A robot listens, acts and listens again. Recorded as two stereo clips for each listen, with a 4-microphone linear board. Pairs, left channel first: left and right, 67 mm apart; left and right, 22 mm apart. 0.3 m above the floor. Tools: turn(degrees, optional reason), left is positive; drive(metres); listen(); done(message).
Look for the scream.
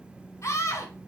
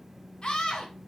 turn(degrees=45, reason="The scream: about 45° left or 135° left.")
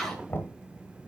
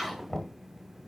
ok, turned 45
done("Found it: a scream, straight ahead.")